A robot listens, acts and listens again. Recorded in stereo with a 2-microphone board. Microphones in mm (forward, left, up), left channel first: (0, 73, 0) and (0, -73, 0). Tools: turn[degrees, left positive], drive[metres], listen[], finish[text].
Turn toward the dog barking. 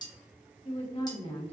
Action: listen[]
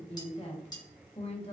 Action: listen[]
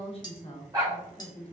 Thought: The dog barking: about 25° right or 155° right.
Action: turn[-25]
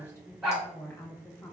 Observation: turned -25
Action: finish[Facing the dog barking.]